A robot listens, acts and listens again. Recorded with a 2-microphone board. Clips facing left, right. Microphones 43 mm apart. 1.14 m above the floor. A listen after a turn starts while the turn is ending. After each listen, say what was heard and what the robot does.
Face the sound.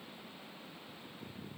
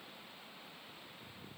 Keep listening.
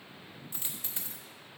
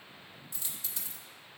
The dropped coin: about 30° left or 150° left. Turn 30° left.
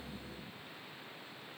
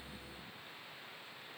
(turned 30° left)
Keep listening.
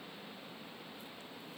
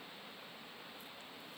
I heard a dropped coin, but can't make it out now. It was about straight ahead or 120° left.